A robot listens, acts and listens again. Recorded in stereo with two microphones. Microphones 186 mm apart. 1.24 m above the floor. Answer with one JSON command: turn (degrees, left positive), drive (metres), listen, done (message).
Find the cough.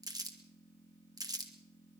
{"listen": true}
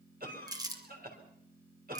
{"turn": -55}
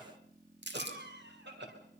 {"turn": -70}
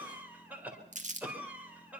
{"turn": -10}
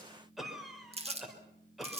{"done": "Facing the cough, over 4 m away."}